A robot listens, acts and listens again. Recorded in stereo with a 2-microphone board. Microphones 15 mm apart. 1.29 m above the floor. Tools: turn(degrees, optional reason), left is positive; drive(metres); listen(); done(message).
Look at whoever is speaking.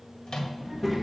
turn(degrees=-30)
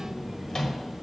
turn(degrees=25, reason="So it is at 25° left.")
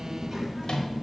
turn(degrees=-20, reason="The child speaking is now 20° right.")
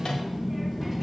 done("Found it: a child speaking, straight ahead.")